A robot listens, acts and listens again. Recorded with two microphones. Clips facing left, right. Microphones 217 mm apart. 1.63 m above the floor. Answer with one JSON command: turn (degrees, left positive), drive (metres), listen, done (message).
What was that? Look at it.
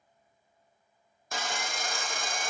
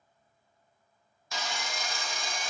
{"turn": 55}
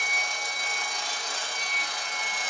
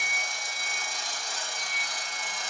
{"turn": 70}
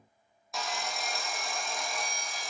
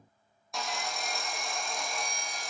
{"done": "Found it: sawing, straight ahead."}